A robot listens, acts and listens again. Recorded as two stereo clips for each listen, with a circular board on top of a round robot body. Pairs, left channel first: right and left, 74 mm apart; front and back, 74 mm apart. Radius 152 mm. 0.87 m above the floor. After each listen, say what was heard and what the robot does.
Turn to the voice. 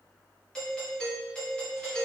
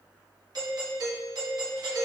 Keep listening.
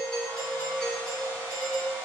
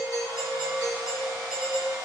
Keep listening.
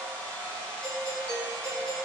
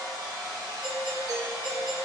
I can't make out anyone speaking to turn to.